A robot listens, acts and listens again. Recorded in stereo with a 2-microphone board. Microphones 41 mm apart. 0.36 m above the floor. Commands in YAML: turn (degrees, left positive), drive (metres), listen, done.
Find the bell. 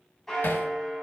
turn: 30
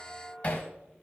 listen: true
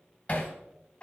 turn: 150
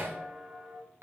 turn: 10
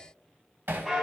done: "Found it: a bell, straight ahead."